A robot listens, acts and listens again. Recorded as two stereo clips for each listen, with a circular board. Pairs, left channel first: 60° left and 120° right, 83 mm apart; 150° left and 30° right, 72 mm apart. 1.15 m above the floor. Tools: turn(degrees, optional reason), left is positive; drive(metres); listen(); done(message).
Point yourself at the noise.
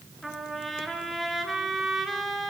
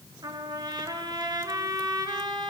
turn(degrees=-30, reason="The trumpet: 30° right.")
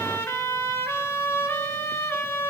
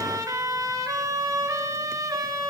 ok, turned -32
done("Found it: a trumpet, straight ahead.")